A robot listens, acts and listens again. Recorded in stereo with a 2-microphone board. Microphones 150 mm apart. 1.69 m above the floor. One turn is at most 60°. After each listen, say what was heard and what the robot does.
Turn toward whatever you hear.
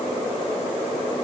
Keep listening.
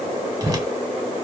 The whoosh: about 25° right or 155° right. Turn 25° right.
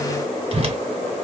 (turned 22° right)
So it is at 125° right. Turn 60° right.
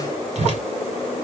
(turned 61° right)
The whoosh is now 65° right. Turn 60° right.
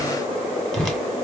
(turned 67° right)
Found it: a whoosh, straight ahead, 1 to 2 m away.